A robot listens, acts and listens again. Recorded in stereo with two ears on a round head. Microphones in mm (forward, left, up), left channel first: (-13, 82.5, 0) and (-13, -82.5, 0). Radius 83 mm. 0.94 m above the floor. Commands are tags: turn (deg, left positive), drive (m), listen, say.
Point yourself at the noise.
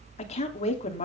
<turn deg="40"/>
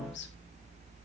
<turn deg="100"/>
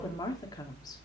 <turn deg="20"/>
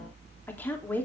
<turn deg="10"/>
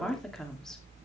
<say>Facing the woman speaking.</say>